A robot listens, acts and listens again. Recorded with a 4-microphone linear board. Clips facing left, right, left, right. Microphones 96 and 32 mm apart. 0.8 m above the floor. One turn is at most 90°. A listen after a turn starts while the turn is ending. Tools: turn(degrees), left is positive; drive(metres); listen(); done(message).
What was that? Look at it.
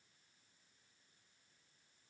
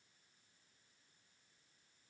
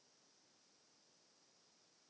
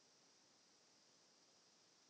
listen()
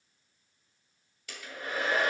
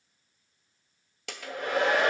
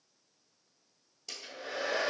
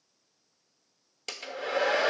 turn(degrees=-90)
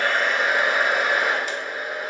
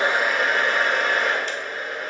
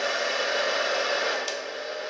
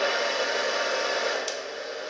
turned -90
done("Facing the hair dryer, 1 to 2 m away.")